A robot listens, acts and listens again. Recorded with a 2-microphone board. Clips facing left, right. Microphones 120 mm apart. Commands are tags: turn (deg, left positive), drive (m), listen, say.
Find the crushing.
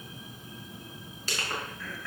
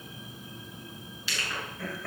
<turn deg="45"/>
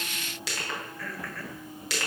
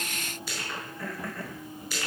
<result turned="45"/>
<turn deg="90"/>
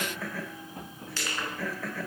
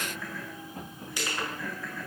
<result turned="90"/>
<turn deg="-15"/>
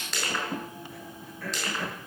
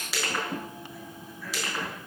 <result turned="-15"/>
<say>Found it: crushing, straight ahead, over 4 m away.</say>